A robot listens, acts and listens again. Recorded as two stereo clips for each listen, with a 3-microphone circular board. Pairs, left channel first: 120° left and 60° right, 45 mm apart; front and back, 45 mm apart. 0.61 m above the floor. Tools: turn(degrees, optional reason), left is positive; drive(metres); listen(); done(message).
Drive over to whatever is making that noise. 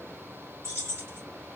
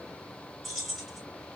turn(degrees=-85, reason="The keys jangling: 85° right.")
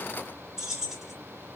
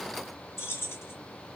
turn(degrees=20, reason="The keys jangling is now 20° left.")
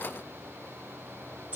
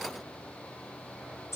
drive(metres=1.0)
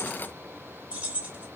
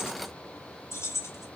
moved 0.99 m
drive(metres=1.0)
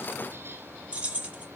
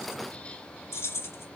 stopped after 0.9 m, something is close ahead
done("I am next to the keys jangling.")